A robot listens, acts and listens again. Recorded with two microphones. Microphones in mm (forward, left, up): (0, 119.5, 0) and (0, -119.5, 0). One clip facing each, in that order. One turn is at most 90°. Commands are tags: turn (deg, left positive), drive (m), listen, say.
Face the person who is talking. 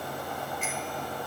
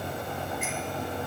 <listen/>
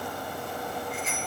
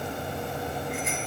<listen/>
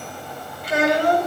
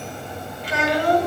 <turn deg="50"/>
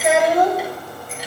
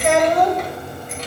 <say>Facing the child speaking, 2 to 4 m away.</say>